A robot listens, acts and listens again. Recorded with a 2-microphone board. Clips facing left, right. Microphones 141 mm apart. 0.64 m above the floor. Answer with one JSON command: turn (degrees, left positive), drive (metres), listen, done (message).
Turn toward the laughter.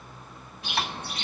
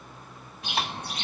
{"listen": true}
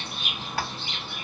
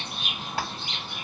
{"listen": true}
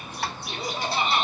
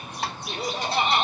{"turn": -70}
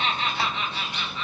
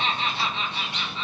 {"turn": -25}
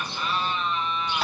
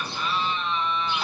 {"done": "Facing the laughter."}